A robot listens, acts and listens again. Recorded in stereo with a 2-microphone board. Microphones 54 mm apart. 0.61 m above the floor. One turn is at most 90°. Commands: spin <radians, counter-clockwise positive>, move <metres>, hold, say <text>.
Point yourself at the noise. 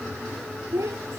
spin -1.13
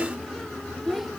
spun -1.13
say Facing the child speaking.